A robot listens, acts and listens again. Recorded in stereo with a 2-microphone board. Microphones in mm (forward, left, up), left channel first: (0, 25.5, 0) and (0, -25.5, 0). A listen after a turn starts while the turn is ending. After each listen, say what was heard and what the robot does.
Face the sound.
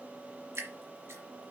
The dripping: about 65° right or 115° right. Turn 65° right.
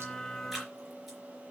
Keep listening.
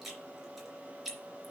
Facing the dripping, 2 to 4 m away.